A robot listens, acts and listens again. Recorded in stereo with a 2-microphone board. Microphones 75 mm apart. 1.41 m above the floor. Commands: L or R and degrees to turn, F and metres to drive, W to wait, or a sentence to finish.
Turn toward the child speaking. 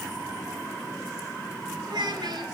R70
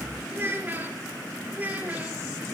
R20
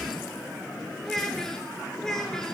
L10
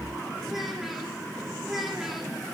Found it: a child speaking, straight ahead, 2 to 4 m away.